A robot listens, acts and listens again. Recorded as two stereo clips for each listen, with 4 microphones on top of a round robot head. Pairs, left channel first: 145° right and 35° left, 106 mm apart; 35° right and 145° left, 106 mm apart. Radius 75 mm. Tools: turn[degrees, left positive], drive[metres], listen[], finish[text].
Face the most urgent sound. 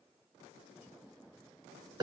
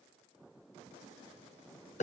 Action: listen[]
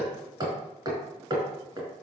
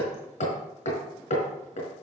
Action: listen[]
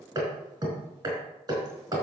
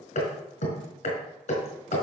Action: finish[I can't make out anything urgent, only hammering.]